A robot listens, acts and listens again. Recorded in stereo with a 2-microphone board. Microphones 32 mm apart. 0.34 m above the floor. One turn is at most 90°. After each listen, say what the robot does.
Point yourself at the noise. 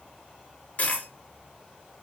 Turn 40° left.
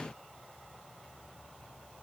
Keep listening.
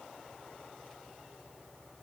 I heard a dropped coin, but can't make it out now. It was about straight ahead or 100° left.